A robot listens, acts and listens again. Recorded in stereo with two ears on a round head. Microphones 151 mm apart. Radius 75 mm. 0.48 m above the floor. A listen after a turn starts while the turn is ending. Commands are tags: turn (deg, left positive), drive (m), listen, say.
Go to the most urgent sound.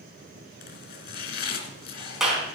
<listen/>
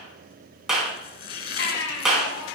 <turn deg="70"/>
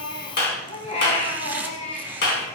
<turn deg="40"/>
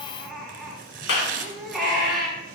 <drive m="1.0"/>
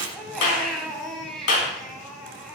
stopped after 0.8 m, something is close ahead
<say>Blocked. The baby crying is further on, straight ahead.</say>